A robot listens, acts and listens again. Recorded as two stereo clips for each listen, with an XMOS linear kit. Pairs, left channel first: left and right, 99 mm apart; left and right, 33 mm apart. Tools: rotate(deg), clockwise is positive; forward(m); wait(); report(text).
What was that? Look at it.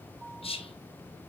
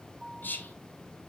rotate(-90)
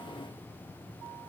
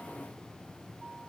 wait()
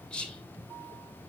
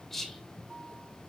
rotate(-10)
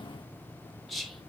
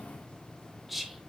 report("Facing the whispering.")